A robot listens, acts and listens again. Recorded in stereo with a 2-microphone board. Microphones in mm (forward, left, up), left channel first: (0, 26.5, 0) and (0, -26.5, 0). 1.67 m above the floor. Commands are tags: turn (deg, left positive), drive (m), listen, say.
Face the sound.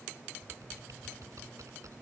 <turn deg="-90"/>
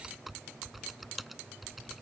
<say>Facing the typing on a keyboard.</say>